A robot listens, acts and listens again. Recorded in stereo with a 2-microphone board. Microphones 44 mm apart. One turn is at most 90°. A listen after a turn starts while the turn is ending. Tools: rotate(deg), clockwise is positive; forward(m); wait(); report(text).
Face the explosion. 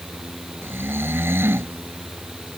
wait()
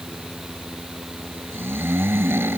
wait()
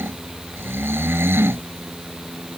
report("I can't make out an explosion, only snoring.")